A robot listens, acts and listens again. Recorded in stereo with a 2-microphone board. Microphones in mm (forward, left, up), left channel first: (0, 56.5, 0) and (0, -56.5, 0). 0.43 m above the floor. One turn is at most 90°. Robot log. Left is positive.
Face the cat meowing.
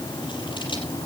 cmd idle
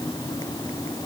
cmd idle
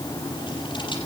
end: I can't make out a cat meowing to turn to.